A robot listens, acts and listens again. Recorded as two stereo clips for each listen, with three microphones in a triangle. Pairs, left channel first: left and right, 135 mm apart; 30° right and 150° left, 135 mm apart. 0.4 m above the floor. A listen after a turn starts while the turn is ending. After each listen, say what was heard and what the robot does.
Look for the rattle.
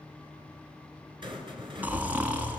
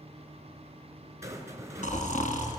The rattle: 140° right. Turn 140° right.
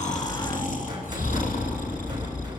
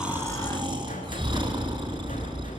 Keep listening.
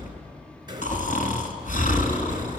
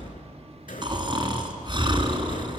The rattle is now 35° right. Turn 35° right.
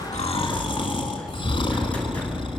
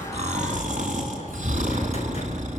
Keep listening.
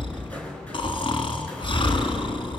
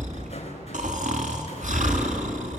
The rattle is now 10° left. Turn 10° left.
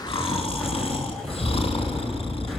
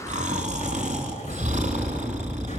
Keep listening.
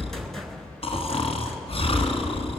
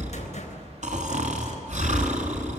Found it: a rattle, straight ahead.